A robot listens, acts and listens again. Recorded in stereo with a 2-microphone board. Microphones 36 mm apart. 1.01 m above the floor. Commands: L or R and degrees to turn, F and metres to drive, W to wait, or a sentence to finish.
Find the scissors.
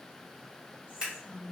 R30
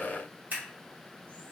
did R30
R120
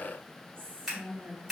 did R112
R10
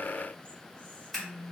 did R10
Found it: scissors, straight ahead.